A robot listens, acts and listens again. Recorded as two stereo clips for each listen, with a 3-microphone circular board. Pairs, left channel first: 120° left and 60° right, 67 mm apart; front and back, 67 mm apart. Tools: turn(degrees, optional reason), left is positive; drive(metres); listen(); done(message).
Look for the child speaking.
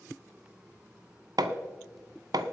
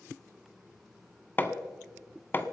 listen()
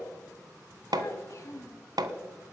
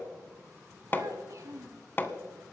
turn(degrees=150, reason="The child speaking: 150° left.")
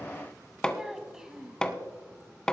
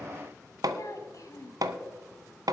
turn(degrees=20, reason="The child speaking is now 20° left.")
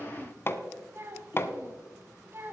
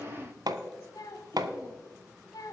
turn(degrees=-10, reason="The child speaking is now 10° right.")
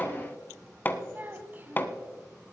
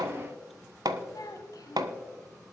done("Facing the child speaking, 1 to 2 m away.")